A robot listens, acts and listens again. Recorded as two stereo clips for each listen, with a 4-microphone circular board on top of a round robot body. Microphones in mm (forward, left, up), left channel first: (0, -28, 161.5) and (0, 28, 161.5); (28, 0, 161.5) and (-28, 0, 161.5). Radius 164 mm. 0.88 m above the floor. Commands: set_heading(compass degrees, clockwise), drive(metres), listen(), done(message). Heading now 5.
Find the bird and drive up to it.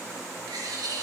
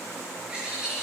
set_heading(260)
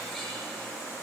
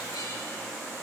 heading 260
listen()
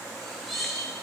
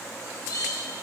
drive(1.0)
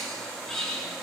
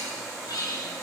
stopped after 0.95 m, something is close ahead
set_heading(270)
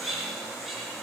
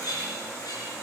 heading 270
done("Something is in my way. I am facing the bird but have not reached it.")